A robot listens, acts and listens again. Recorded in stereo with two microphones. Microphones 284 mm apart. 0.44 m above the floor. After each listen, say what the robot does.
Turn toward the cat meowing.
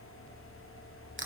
Keep listening.
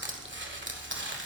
Keep listening.
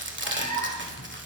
Turn 90° right.
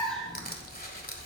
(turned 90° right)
Facing the cat meowing, 2 to 4 m away.